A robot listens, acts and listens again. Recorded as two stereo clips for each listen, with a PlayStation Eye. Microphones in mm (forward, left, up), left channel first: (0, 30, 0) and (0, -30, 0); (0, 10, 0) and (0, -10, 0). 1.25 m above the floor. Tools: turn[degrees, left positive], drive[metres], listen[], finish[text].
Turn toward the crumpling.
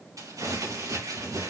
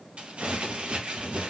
Action: turn[-90]
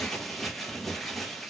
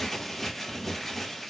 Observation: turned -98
Action: finish[Facing the crumpling.]